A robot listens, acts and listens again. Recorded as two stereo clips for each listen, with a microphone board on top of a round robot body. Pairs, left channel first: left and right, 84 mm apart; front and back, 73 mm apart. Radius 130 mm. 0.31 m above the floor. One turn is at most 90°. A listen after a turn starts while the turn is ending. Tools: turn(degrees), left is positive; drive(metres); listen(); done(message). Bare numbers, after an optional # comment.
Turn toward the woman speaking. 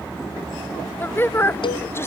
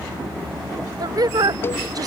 # The woman speaking: 150° left.
turn(90)
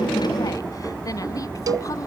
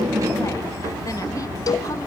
# Nothing new. It was at 60° left.
turn(60)
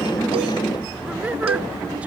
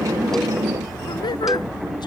listen()
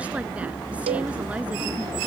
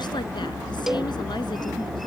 done("I heard a woman speaking from this way, but can't make it out now.")